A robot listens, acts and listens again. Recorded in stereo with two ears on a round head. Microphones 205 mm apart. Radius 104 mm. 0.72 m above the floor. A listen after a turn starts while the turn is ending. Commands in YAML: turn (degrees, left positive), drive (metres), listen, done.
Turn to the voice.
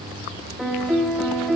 listen: true
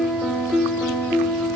listen: true
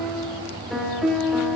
done: "I can't make out anyone speaking, only a piano."